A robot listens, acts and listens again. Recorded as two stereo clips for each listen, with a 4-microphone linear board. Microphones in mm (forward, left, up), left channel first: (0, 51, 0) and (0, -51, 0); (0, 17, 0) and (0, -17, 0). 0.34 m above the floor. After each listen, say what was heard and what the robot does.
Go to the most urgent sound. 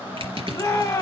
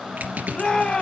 The shout: about 35° left or 145° left. Turn 35° left.
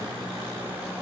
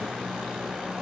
Keep listening.
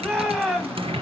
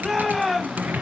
Drive 1.0 m forward.
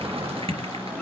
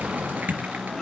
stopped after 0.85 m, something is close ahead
Keep listening.
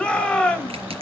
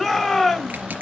The shout is now 15° left. Turn 15° left.
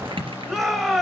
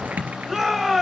Arrived at the shout, straight ahead.